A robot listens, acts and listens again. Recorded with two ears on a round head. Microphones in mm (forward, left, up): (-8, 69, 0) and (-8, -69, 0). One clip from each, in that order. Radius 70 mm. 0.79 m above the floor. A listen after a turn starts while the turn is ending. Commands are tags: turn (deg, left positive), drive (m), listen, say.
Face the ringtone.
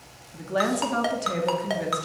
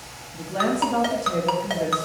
<turn deg="30"/>
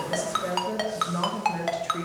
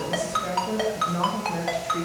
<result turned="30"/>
<turn deg="145"/>
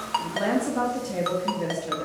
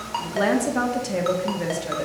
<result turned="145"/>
<listen/>
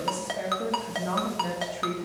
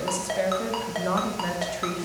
<turn deg="10"/>
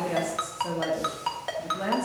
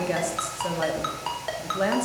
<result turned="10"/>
<say>Found it: a ringtone, straight ahead, 1 to 2 m away.</say>